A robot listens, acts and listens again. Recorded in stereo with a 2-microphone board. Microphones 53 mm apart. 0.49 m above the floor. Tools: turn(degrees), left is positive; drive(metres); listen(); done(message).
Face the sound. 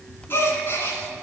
turn(degrees=50)
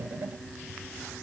listen()
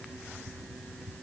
done("I heard a gasp, but can't make it out now. It was about straight ahead or 80° left.")